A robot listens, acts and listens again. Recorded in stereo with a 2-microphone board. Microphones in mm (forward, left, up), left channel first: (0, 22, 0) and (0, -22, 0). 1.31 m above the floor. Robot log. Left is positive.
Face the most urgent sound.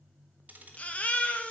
note: The baby crying: about 30° left or 150° left.
cmd yaw +30
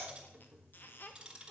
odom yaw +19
cmd idle
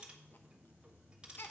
note: So it is at 130° left.
cmd yaw +130
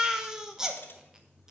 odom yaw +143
note: The baby crying is now 15° right.
cmd yaw -15
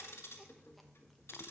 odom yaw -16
cmd idle
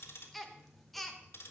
end: Found it: a baby crying, straight ahead.